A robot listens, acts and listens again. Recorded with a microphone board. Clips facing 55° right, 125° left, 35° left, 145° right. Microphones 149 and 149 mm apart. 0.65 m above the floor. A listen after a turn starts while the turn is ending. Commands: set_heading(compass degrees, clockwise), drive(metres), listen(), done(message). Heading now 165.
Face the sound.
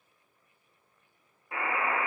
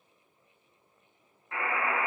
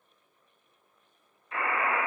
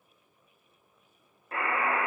set_heading(285)
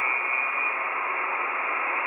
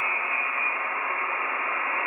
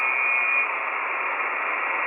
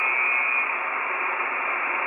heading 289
done("Facing the buzzer, 1 to 2 m away.")